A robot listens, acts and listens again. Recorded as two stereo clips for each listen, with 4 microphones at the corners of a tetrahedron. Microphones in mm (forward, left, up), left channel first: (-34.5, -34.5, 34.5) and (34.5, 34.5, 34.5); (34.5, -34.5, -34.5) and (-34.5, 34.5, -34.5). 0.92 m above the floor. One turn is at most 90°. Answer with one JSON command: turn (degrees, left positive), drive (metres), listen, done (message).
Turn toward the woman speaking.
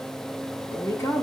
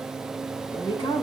{"turn": -75}
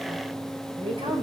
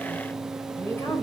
{"turn": 25}
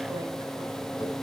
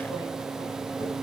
{"listen": true}
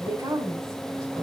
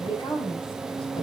{"turn": -15}
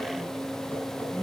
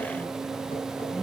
{"done": "Found it: a woman speaking, straight ahead."}